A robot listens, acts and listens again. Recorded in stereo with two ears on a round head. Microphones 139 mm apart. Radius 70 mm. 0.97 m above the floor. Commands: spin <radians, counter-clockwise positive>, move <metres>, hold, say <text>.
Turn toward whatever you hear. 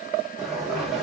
spin 0.52
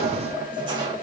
spin -0.52
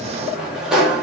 say Found it: a sliding door, straight ahead, 1 to 2 m away.